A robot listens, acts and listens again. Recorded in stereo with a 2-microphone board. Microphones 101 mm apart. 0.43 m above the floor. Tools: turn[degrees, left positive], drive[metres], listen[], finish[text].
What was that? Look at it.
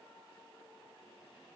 Action: listen[]
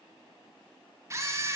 Thought: The camera shutter: about 30° right or 150° right.
Action: turn[-30]
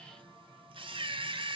Thought: So it is at 120° right.
Action: turn[-120]
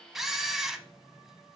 Action: finish[Facing the camera shutter, under 1 m away.]